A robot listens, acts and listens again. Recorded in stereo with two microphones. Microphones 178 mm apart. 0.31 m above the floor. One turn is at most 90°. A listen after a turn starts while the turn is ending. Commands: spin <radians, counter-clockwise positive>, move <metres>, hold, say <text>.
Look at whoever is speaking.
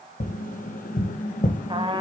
hold
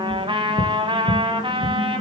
hold
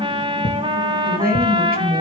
spin -0.96
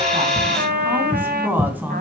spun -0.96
spin -0.17
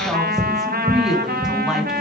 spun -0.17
say Found it: a woman speaking, straight ahead, 2 to 4 m away.